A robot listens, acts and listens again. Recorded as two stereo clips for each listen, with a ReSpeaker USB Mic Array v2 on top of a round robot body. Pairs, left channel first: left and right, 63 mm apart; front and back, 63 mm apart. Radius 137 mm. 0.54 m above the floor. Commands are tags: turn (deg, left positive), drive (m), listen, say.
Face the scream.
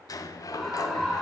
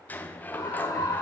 <say>Found it: a scream, straight ahead, over 4 m away.</say>